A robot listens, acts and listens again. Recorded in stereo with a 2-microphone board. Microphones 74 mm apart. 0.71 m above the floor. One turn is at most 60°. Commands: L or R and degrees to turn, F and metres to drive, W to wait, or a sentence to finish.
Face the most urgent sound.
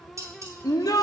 L55
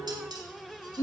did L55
L50
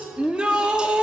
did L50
R15
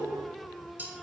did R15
W
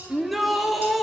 Facing the shout.